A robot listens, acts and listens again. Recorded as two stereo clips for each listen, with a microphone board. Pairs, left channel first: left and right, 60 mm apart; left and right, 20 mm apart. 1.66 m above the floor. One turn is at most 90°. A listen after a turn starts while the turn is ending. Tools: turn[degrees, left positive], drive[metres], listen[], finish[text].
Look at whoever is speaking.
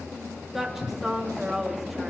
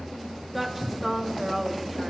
Action: turn[-30]
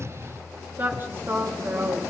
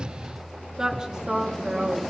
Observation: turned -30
Thought: So it is at 145° right.
Action: turn[-90]
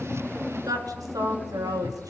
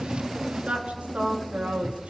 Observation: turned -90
Thought: The woman speaking is now 100° right.
Action: turn[-90]
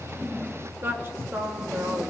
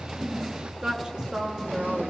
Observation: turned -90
Thought: The woman speaking is now 40° right.
Action: turn[-40]
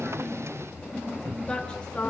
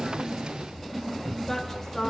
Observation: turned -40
Thought: The woman speaking is now 15° left.
Action: turn[15]
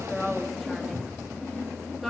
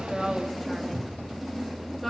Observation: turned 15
Action: finish[Facing the woman speaking.]